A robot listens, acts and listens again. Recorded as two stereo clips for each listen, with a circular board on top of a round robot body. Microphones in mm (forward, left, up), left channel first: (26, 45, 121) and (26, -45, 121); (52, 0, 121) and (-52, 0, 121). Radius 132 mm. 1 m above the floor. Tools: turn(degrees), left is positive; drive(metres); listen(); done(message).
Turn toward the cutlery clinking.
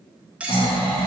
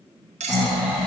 turn(degrees=-170)
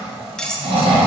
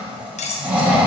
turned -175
done("Facing the cutlery clinking, under 1 m away.")